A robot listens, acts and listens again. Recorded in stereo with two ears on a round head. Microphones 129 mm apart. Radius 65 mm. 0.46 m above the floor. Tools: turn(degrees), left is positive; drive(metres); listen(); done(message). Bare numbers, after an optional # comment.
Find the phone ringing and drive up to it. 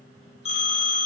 # The phone ringing: about 40° left or 140° left.
turn(40)
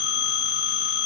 # So it is at 100° left.
turn(100)
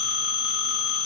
drive(1.0)
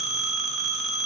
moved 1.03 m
drive(1.0)
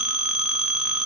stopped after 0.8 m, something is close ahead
# The phone ringing is now 10° right.
turn(-10)
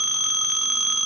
done("Arrived at the phone ringing, straight ahead.")